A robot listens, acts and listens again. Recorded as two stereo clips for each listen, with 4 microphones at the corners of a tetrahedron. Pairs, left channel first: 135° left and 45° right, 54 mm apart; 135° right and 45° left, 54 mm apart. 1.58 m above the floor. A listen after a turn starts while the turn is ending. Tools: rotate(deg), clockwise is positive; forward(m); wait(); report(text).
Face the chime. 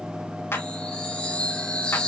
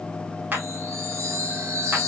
rotate(-70)
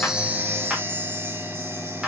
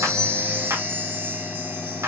report("Found it: a chime, straight ahead.")